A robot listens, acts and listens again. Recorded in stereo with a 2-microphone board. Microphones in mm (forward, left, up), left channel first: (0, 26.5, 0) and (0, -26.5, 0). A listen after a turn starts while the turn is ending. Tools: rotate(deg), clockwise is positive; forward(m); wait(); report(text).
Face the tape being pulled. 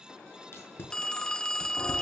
rotate(-55)
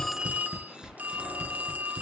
report("Facing the tape being pulled, over 4 m away.")